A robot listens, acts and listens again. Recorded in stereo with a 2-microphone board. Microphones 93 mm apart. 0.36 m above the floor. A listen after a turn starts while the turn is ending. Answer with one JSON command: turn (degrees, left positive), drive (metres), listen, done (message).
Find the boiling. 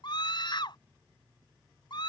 {"listen": true}
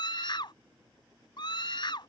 {"listen": true}
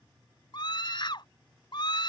{"done": "I can't make out boiling, only a scream."}